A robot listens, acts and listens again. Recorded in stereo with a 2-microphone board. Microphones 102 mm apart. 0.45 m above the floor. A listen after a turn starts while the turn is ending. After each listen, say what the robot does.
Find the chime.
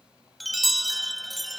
Turn 30° left.
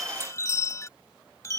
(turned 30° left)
Turn 150° left.
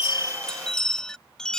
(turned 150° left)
Found it: a chime, straight ahead.